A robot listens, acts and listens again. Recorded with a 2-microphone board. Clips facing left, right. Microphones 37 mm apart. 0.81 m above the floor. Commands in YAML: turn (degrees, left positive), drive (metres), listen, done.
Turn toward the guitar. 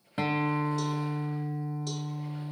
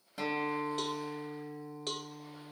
turn: 35
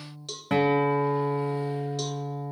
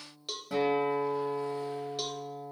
turn: 110
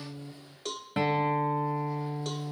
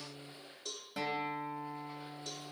turn: 35
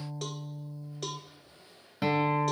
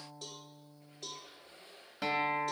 done: "Found it: a guitar, straight ahead, 1 to 2 m away."